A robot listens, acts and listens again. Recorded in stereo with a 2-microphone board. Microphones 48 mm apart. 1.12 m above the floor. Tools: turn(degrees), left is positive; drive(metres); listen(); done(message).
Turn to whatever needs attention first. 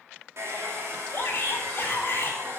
turn(degrees=50)
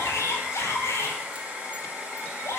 turn(degrees=80)
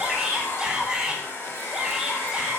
turn(degrees=-15)
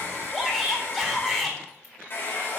done("Facing the shout.")